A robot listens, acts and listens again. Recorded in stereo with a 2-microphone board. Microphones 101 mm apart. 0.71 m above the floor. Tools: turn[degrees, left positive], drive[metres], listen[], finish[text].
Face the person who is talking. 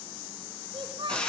Thought: The child speaking: about 60° right or 120° right.
Action: turn[-60]
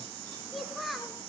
Action: finish[Facing the child speaking.]